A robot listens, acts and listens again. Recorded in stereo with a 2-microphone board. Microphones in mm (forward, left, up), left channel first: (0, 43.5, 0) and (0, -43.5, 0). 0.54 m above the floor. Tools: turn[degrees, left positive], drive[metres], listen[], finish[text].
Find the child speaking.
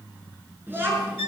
Thought: The child speaking: about 25° right or 155° right.
Action: turn[-25]
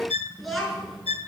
Action: finish[Facing the child speaking.]